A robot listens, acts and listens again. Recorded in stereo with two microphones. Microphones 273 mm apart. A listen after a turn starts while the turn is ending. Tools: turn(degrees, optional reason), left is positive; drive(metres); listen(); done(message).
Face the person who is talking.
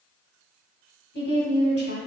turn(degrees=40, reason="The woman speaking: about 40° left or 140° left.")
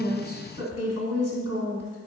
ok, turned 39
turn(degrees=95, reason="So it is at 95° left.")
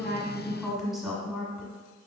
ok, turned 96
done("Facing the woman speaking, 1 to 2 m away.")